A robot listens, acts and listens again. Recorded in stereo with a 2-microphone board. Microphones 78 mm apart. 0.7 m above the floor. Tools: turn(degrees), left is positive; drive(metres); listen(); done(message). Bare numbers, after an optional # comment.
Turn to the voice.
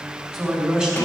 # The man speaking: about 15° right or 165° right.
turn(-15)
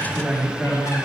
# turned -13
turn(-30)
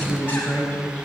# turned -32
# So it is at 20° left.
turn(20)
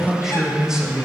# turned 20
# The man speaking is now 10° right.
turn(-10)
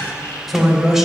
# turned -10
done("Found it: a man speaking, straight ahead, 2 to 4 m away.")